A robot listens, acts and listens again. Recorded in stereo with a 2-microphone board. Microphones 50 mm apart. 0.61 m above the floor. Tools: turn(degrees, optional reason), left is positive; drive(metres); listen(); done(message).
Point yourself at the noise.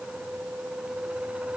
listen()
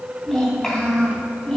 turn(degrees=30)
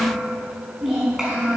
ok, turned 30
turn(degrees=-10, reason="So it is at 10° right.")
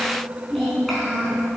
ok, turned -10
done("Facing the child speaking, over 4 m away.")